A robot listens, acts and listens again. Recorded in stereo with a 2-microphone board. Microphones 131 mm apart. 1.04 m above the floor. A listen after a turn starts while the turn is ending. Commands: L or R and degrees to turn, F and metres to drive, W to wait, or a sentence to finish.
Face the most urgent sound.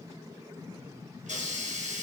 W
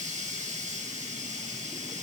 W
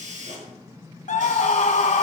L70
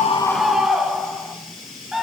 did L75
Facing the scream, 1 to 2 m away.